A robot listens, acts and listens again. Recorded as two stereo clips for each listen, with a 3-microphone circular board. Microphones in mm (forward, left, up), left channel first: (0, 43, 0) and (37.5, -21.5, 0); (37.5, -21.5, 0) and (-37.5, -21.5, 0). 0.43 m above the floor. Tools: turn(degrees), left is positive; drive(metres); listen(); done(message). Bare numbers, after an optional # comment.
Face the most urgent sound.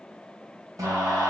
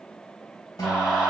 # The scream: 75° right.
turn(-75)
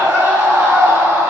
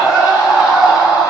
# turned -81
# The scream is now 10° left.
turn(10)
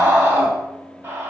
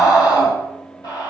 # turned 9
done("Facing the scream.")